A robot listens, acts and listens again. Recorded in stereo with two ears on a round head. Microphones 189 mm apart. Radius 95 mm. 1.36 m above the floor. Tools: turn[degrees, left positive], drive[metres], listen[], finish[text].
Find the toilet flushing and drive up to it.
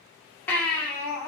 Action: listen[]
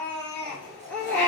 Thought: The toilet flushing: about 30° right or 150° right.
Action: turn[-30]
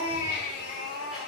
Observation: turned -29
Action: listen[]
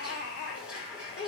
Action: drive[1.0]
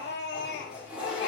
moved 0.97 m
Action: drive[1.0]
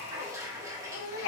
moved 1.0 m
Thought: The toilet flushing is now 15° right.
Action: turn[-15]
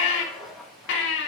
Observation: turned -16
Action: drive[1.0]
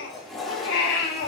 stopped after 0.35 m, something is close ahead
Action: finish[I am next to the toilet flushing.]